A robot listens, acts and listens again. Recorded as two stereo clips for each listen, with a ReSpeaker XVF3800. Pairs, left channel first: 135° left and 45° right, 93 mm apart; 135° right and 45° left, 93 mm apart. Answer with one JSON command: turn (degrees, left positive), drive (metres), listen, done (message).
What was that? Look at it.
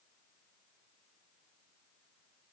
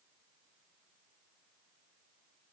{"listen": true}
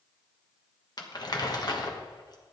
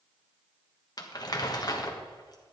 {"turn": 180}
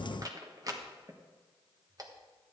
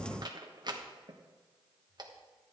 {"done": "Found it: crumpling, straight ahead."}